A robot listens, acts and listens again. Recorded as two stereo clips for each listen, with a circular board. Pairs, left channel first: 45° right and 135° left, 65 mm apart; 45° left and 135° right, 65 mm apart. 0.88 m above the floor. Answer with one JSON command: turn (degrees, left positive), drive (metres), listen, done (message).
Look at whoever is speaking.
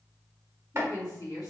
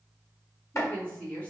{"turn": -20}
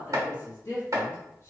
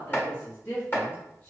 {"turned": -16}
{"done": "Found it: a woman speaking, straight ahead."}